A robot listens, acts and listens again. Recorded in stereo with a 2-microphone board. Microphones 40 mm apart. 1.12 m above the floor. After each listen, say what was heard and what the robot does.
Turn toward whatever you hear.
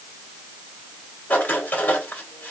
The writing: about 50° left or 130° left. Turn 50° left.
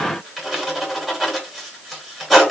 Facing the writing.